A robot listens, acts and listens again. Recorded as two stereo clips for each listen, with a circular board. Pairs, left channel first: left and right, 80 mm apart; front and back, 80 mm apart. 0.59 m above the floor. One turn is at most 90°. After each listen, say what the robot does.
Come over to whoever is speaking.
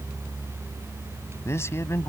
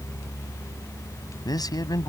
Turn 35° left.
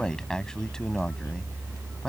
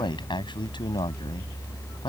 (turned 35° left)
Turn 10° left.
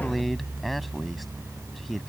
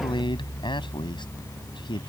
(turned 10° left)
Drive 1.0 m forward.
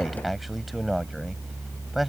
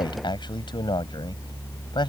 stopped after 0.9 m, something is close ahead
Something is in my way. I am facing the man speaking but have not reached it.